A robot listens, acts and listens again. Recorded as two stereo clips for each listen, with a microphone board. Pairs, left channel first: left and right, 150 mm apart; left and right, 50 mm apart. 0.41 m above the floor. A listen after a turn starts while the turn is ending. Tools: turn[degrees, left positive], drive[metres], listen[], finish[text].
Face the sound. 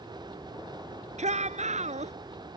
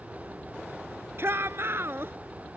Thought: The shout: about 50° right or 130° right.
Action: turn[-50]
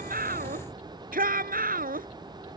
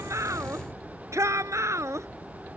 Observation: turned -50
Thought: So it is at 80° right.
Action: turn[-80]
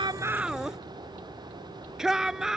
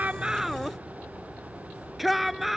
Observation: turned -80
Action: finish[Found it: a shout, straight ahead.]